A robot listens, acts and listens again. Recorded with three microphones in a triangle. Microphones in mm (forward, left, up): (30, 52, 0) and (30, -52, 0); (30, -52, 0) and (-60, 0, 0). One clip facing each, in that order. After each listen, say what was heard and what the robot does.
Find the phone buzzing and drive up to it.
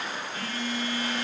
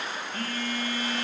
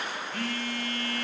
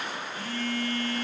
The phone buzzing: 50° right. Turn 50° right.
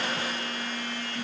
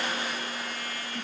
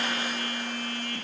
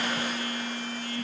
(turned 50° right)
Drive 1.0 m forward.
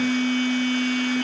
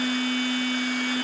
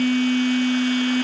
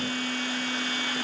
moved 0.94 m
Drive 1.0 m forward.
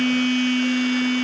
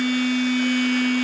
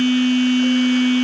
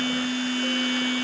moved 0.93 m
Drive 1.0 m forward.
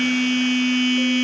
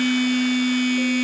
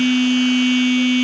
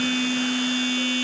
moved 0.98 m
Drive 1.0 m forward.
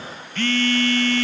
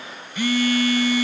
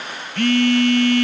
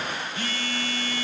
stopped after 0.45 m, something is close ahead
The phone buzzing is now 10° right. Turn 10° right.
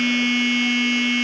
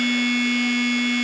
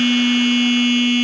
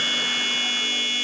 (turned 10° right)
Arrived at the phone buzzing, straight ahead.